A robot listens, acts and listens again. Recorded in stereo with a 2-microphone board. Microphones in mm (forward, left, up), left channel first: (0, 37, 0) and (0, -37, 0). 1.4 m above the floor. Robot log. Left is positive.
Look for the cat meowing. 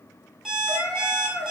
note: The cat meowing: about 45° left or 135° left.
cmd yaw +45
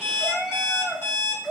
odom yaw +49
note: So it is at 15° right.
cmd yaw -15
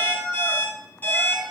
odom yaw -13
note: The cat meowing is now 25° right.
cmd yaw -25
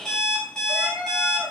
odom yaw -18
note: The cat meowing is now 20° right.
cmd yaw -20
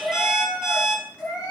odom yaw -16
note: The cat meowing is now 15° right.
cmd yaw -15
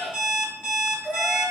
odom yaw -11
end: Facing the cat meowing.